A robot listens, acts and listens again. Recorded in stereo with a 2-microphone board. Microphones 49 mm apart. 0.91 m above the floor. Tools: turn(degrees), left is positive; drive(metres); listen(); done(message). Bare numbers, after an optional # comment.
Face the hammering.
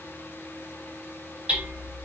# The hammering: about 25° right or 155° right.
turn(-25)
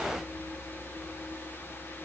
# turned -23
listen()
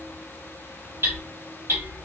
# So it is at 130° right.
turn(-130)
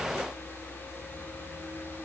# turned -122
listen()
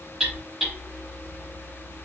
# The hammering is now 10° right.
turn(-10)
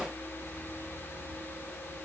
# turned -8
listen()
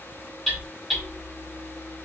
done("Facing the hammering, 1 to 2 m away.")